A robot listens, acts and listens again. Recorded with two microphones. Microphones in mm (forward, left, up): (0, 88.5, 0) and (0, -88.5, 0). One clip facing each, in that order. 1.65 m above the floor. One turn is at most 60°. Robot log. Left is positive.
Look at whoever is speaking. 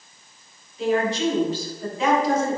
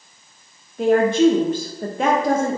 note: The woman speaking: about 55° right or 125° right.
cmd yaw -55
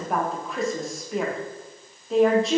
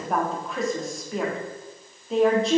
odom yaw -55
end: Facing the woman speaking.